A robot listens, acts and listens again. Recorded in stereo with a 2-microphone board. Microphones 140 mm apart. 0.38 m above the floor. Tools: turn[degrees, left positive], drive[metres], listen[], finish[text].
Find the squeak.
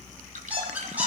Action: turn[-30]
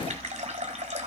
Action: listen[]
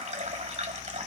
Action: listen[]
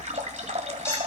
Action: finish[I heard a squeak, but can't make it out now. It was about 20° left or 140° right.]